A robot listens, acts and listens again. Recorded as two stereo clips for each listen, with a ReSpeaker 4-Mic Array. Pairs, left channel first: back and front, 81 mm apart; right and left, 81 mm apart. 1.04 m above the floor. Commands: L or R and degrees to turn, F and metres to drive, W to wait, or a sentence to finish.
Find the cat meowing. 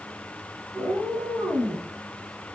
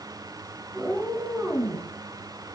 L30
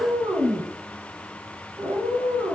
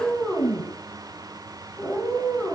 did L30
R10
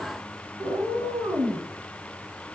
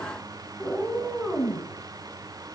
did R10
Found it: a cat meowing, straight ahead, 2 to 4 m away.